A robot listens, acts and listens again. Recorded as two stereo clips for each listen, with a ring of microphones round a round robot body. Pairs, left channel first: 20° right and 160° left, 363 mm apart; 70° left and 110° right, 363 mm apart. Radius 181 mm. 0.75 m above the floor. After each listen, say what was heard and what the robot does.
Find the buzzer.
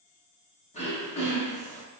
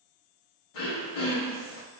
Keep listening.
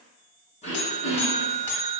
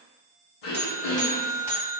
Facing the buzzer, 1 to 2 m away.